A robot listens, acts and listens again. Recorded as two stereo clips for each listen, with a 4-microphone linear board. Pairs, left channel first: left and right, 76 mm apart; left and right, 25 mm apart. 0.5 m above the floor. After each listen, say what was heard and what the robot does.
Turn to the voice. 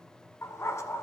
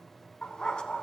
Keep listening.
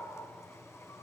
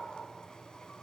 Keep listening.
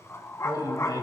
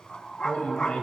The man speaking: about 65° left or 115° left. Turn 65° left.
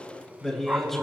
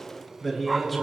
Facing the man speaking, 2 to 4 m away.